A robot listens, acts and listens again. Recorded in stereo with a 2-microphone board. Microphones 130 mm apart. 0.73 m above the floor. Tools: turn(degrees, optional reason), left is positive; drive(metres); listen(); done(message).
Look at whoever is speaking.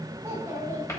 turn(degrees=-20, reason="The child speaking: about 20° right or 160° right.")
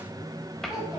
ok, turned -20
done("Facing the child speaking.")